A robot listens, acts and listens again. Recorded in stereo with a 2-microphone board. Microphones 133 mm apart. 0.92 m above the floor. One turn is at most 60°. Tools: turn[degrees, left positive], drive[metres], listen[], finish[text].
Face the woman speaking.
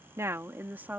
Action: turn[-30]
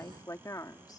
Thought: So it is at 25° left.
Action: turn[25]
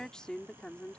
Thought: The woman speaking is now 10° left.
Action: turn[10]
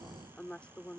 Thought: The woman speaking is now 10° left.
Action: turn[10]
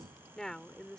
Action: finish[Found it: a woman speaking, straight ahead.]